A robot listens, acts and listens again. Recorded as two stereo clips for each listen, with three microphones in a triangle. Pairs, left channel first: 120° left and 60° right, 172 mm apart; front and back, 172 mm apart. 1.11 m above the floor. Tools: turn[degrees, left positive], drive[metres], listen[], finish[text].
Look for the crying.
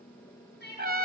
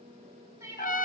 Thought: The crying: 105° left.
Action: turn[105]
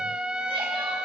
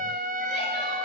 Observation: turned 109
Action: listen[]
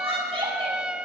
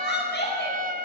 Action: finish[Facing the crying, over 4 m away.]